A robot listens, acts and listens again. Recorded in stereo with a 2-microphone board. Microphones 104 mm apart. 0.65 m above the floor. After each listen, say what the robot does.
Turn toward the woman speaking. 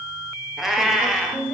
Turn 30° left.
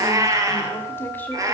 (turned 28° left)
Turn 15° left.
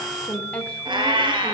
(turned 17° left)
Turn 30° left.
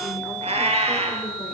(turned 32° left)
Keep listening.
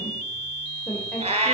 Turn 30° left.
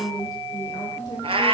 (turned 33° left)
Turn 145° left.
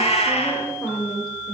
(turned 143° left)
Found it: a woman speaking, straight ahead, 2 to 4 m away.